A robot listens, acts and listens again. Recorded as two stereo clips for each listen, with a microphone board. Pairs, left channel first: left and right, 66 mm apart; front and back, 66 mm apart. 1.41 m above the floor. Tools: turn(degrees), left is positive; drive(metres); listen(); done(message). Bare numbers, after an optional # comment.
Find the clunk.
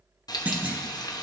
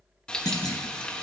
# The clunk: 20° right.
turn(-20)
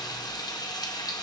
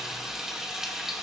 done("I heard a clunk from this way, but can't make it out now.")